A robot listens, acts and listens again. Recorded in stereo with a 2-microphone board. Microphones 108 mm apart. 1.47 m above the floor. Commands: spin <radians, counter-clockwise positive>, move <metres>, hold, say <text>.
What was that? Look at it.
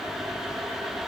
hold
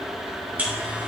spin -0.52
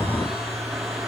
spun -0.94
hold
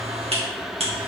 spin -2.01
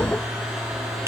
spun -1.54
spin -0.44
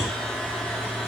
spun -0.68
spin 0.17
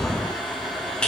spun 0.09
spin 0.17
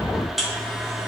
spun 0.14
say Found it: a buzzer, straight ahead.